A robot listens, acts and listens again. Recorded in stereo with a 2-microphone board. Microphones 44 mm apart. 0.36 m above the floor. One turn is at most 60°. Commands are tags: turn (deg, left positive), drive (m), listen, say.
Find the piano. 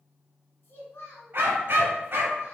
<listen/>
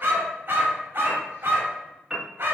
<turn deg="-30"/>
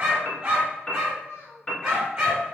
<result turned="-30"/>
<turn deg="20"/>
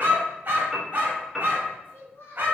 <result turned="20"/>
<say>Found it: a piano, straight ahead, 1 to 2 m away.</say>